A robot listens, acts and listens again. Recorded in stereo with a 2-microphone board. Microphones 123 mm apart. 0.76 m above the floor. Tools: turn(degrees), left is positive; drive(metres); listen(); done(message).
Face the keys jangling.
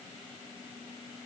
listen()
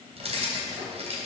turn(degrees=-55)
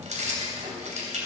turn(degrees=-70)
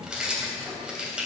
done("Facing the keys jangling.")